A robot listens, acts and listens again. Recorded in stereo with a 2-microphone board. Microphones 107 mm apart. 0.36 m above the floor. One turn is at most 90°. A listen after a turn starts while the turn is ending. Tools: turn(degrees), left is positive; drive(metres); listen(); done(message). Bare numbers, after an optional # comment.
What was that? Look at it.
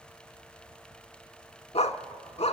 turn(90)
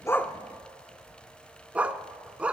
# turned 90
# So it is at 10° right.
turn(-10)
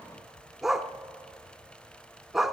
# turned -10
done("Facing the dog barking, under 1 m away.")